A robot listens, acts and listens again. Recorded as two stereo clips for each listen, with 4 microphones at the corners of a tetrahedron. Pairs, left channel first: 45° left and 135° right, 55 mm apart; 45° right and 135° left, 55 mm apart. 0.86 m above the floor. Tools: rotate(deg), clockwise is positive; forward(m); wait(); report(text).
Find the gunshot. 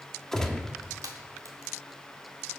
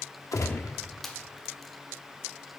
rotate(35)
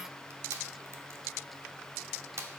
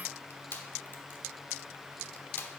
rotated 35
report("I heard a gunshot from this way, but can't make it out now.")